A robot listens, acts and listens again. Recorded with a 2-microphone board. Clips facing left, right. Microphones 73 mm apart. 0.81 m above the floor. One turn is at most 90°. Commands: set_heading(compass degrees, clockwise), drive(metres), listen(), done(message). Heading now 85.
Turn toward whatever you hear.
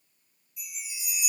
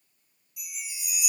set_heading(175)
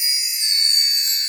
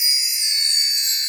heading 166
done("Found it: a chime, straight ahead, 2 to 4 m away.")